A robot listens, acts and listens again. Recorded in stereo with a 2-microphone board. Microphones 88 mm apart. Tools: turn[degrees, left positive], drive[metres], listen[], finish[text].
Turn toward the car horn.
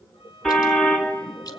Action: turn[30]
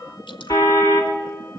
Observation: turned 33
Thought: So it is at 145° left.
Action: turn[145]
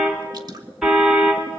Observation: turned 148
Action: finish[Facing the car horn.]